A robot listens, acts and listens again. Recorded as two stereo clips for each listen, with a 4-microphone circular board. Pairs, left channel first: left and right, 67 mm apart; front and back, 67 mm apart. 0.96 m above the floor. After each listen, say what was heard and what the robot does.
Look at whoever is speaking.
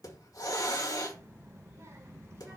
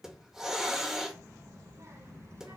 The child speaking: 145° right. Turn 145° right.
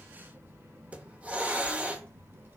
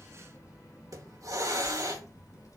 The child speaking is now 40° right. Turn 40° right.
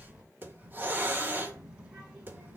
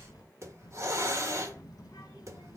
The child speaking is now 25° right. Turn 25° right.
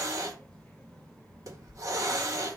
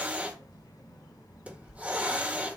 Found it: a child speaking, straight ahead.